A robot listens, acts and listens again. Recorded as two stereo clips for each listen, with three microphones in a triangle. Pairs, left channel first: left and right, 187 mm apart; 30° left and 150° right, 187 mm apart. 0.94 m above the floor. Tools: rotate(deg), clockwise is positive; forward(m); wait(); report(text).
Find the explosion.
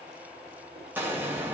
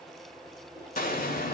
rotate(10)
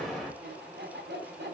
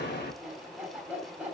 report("Found it: an explosion, straight ahead.")